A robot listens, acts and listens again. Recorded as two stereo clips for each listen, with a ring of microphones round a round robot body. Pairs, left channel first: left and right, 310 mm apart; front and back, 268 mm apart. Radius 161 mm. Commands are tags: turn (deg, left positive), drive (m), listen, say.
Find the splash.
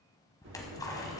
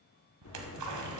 <turn deg="170"/>
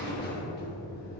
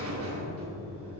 <say>Facing where the splash came from. I can't hear it now.</say>